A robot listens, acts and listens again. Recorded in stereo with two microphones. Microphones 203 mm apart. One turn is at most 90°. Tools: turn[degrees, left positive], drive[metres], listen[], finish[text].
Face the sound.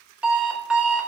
Action: turn[-30]
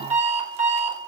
Thought: So it is at 145° right.
Action: turn[-90]
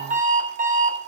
Thought: The alarm clock is now 40° right.
Action: turn[-40]
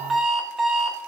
Action: finish[Found it: an alarm clock, straight ahead.]